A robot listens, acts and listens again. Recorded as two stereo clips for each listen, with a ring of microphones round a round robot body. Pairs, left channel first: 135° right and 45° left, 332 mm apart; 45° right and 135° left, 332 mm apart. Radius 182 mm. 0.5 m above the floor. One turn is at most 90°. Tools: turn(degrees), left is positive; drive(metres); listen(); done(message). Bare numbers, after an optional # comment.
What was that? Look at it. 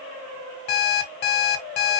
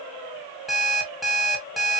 # The alarm clock: 135° right.
turn(-90)
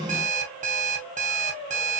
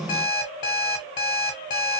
# The alarm clock is now 25° right.
turn(-25)
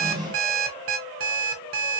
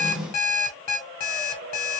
done("Facing the alarm clock, 1 to 2 m away.")